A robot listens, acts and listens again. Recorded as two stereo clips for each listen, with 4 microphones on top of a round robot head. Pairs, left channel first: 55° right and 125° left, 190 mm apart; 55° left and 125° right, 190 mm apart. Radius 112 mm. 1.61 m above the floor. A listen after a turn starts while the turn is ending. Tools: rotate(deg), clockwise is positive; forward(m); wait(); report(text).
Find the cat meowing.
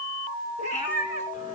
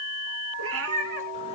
rotate(105)
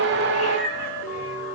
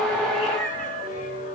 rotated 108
wait()
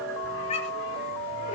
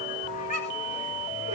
report("Found it: a cat meowing, straight ahead, 2 to 4 m away.")